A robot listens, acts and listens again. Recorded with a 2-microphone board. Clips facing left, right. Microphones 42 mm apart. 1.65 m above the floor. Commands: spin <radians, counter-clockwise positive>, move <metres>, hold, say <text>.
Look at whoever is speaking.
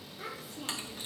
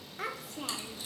spin -1.05
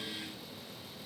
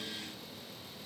hold
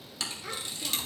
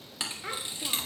spin -0.52
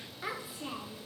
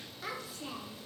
spin 0.26
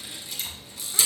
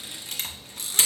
hold
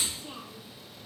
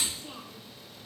say Facing the child speaking, under 1 m away.